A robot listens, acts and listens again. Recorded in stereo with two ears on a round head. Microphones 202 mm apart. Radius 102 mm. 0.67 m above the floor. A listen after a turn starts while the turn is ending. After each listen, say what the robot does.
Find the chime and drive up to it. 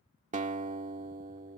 Keep listening.
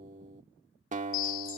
Turn 65° left.
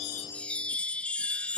Drive 1.0 m forward.
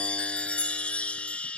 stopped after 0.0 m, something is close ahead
Something is in my way. I am facing the chime but have not reached it.